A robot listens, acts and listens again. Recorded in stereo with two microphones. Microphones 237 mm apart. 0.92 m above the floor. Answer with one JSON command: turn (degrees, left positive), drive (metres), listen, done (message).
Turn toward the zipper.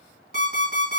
{"listen": true}
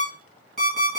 {"listen": true}
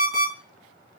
{"done": "I can't make out a zipper, only an alarm clock."}